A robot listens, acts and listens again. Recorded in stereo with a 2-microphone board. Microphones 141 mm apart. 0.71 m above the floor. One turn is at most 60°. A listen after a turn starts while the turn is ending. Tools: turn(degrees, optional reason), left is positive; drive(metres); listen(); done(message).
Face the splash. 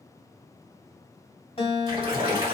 turn(degrees=-35, reason="The splash: about 35° right or 145° right.")
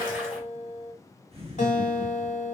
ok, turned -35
listen()
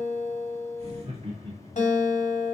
done("I heard a splash, but can't make it out now. It was about straight ahead or 110° right.")